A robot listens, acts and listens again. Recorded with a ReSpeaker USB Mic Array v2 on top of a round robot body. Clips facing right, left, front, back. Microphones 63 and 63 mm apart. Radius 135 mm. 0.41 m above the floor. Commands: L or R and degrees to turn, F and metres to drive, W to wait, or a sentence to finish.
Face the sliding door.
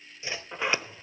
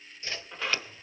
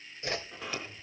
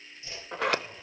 R160
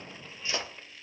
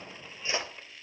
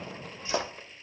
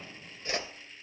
Facing the sliding door, 1 to 2 m away.